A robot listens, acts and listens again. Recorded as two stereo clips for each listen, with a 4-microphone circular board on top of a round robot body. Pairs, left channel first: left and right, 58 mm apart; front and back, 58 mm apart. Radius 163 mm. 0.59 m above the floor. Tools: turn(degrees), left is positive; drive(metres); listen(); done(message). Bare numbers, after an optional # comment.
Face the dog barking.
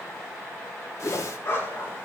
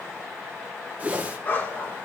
# The dog barking: 55° left.
turn(55)
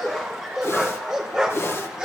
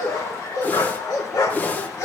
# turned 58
# The dog barking is now 15° right.
turn(-15)
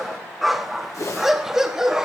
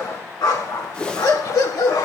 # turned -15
# The dog barking is now 10° right.
turn(-10)
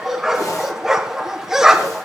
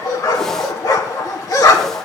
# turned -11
done("Found it: a dog barking, straight ahead.")